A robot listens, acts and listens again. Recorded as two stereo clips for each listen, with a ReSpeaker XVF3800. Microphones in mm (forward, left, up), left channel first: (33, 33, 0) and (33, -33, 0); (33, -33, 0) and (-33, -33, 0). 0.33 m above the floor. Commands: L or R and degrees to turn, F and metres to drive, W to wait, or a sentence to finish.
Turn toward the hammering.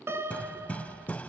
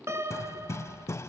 L25
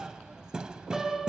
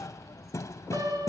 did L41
R15
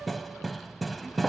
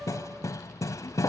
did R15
Found it: hammering, straight ahead, 1 to 2 m away.